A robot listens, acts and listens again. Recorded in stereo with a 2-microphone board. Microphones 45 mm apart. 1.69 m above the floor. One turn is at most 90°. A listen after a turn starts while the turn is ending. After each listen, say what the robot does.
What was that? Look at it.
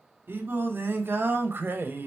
Turn 50° right.
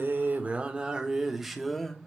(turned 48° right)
Turn 10° left.
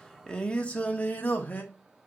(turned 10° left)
Turn 40° left.
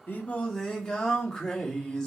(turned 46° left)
Turn 15° left.
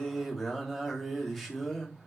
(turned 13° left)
Found it: singing, straight ahead, 2 to 4 m away.